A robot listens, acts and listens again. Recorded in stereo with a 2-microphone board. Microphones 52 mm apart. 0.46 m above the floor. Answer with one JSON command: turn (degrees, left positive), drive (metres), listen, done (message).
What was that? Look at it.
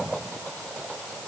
{"listen": true}
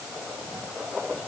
{"listen": true}
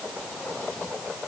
{"done": "I can't make out anything to turn to."}